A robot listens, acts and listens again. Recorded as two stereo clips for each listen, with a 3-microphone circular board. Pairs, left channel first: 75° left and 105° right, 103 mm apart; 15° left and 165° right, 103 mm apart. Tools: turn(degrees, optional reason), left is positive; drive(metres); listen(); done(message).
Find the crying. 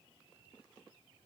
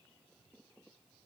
listen()
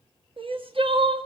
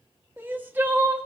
turn(degrees=-95, reason="The crying: 95° right.")
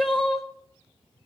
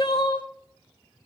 turn(degrees=-15, reason="The crying is now 15° right.")
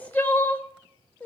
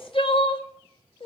done("Facing the crying.")